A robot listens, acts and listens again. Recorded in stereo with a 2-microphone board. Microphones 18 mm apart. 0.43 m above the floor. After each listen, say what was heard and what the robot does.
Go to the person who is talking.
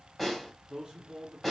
The man speaking: about 40° right or 140° right. Turn 40° right.
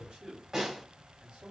So it is at 95° right. Turn 95° right.
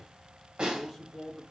Drive 1.0 m forward.
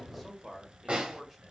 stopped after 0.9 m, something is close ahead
I am next to the man speaking.